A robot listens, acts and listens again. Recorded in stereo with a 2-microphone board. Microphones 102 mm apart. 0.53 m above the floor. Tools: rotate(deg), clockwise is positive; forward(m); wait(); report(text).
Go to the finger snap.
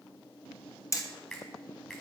rotate(-30)
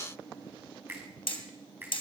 rotate(25)
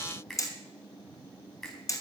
forward(1.0)
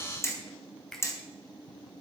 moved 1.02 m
forward(1.0)
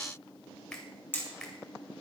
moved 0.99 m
rotate(-10)
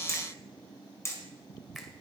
wait()
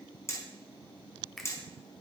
forward(1.0)
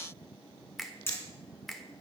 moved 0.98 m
forward(1.0)
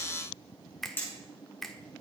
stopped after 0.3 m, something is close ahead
report("Arrived at the finger snap, straight ahead.")